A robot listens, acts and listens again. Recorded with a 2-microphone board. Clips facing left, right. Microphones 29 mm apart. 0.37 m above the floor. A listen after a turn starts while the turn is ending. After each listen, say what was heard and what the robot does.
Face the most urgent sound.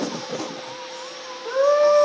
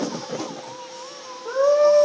The scream: about 40° left or 140° left. Turn 40° left.
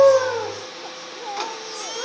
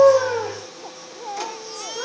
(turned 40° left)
Keep listening.
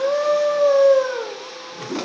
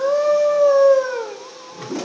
Facing the scream, over 4 m away.